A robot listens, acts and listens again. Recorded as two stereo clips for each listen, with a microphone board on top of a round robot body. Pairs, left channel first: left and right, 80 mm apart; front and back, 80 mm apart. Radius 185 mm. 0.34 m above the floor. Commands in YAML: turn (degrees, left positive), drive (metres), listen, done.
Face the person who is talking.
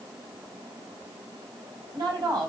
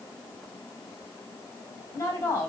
turn: -60
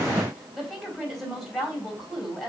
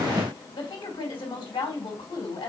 done: "Found it: a woman speaking, straight ahead, 2 to 4 m away."